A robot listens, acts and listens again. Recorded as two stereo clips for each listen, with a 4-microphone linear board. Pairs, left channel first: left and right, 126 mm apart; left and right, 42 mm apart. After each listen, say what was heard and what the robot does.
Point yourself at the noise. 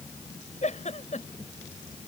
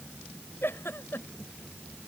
The giggle: about 70° left or 110° left. Turn 70° left.
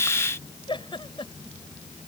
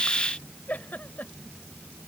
So it is at 40° left. Turn 40° left.
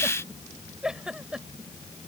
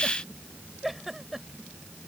Found it: a giggle, straight ahead.